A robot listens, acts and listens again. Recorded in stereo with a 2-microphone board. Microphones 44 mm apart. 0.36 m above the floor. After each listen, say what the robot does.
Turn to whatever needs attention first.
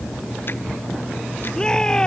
Turn 15° left.
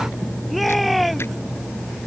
Found it: a shout, straight ahead.